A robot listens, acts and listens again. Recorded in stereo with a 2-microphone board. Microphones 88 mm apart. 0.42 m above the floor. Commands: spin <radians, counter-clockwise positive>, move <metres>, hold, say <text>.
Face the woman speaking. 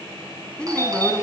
spin 0.52
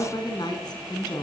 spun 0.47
spin 2.27
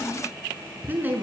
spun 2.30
spin -0.35
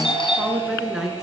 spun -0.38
say Found it: a woman speaking, straight ahead, over 4 m away.